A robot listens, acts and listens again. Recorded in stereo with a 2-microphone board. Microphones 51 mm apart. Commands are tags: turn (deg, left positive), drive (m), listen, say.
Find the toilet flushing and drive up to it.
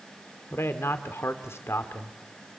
<listen/>
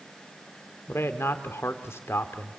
<listen/>
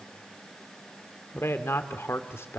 <say>I can't make out a toilet flushing, only a man speaking.</say>